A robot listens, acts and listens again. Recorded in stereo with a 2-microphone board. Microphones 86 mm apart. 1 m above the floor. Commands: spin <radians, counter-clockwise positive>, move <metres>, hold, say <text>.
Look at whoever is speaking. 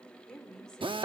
spin 0.52
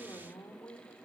spin 2.44
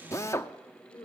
spin 0.87
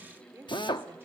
spin -0.44
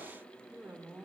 spin -0.26
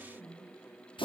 say Facing the woman speaking, 2 to 4 m away.